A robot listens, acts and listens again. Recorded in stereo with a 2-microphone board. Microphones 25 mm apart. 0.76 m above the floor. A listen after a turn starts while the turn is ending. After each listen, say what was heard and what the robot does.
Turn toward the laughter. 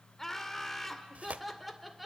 Turn 30° right.
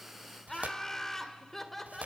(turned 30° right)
Turn 30° left.
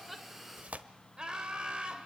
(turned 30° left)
So it is at 40° right. Turn 40° right.
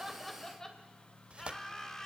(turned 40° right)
The laughter is now 20° left. Turn 20° left.
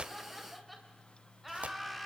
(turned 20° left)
Found it: laughter, straight ahead.